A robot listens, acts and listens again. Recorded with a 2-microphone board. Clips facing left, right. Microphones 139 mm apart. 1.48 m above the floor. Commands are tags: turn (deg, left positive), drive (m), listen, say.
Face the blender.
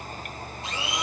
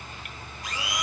<turn deg="25"/>
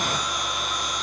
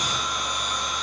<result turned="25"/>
<say>Facing the blender, 1 to 2 m away.</say>